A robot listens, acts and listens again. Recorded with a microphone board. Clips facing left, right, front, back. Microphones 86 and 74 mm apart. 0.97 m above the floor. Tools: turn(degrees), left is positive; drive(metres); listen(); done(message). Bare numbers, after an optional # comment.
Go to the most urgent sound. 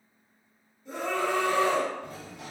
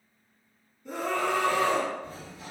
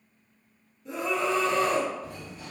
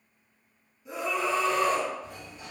# The scream: 100° right.
turn(-100)
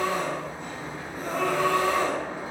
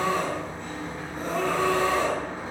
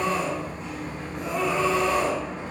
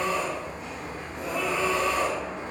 # The scream is now 40° right.
turn(-40)
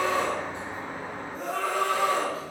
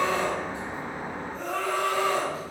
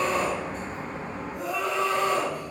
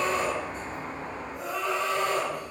# The scream is now 10° left.
turn(10)
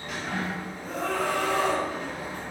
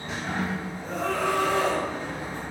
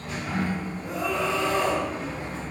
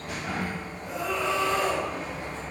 drive(1.0)
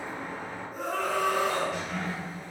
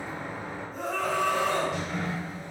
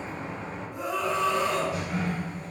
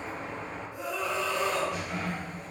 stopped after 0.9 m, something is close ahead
done("Arrived at the scream, straight ahead.")